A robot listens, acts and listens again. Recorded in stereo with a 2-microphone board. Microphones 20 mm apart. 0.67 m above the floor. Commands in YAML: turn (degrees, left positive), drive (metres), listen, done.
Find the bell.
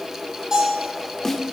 turn: -40
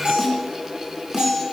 turn: -100
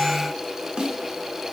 listen: true
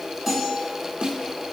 listen: true
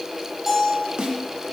turn: -15
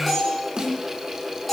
done: "Facing the bell."